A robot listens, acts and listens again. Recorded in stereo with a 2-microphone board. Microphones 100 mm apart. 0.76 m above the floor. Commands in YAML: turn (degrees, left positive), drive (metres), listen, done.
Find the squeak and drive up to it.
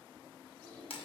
turn: 30
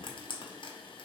listen: true
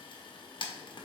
listen: true
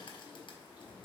turn: -20
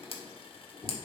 drive: 1.0
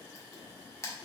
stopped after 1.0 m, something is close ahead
listen: true
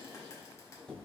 turn: 10
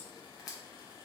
listen: true
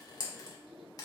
listen: true
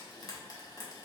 done: "Facing where the squeak came from. I can't hear it now. I did not reach it."